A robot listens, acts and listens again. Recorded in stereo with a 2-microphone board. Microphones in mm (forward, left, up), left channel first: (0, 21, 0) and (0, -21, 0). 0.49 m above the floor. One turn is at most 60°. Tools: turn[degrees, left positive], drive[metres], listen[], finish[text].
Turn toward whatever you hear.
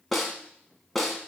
Action: turn[30]
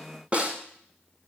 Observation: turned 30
Thought: So it is at 30° right.
Action: turn[-30]
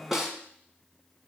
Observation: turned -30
Thought: The snare drum is now 10° right.
Action: turn[-10]
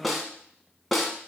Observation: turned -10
Action: finish[Facing the snare drum, 1 to 2 m away.]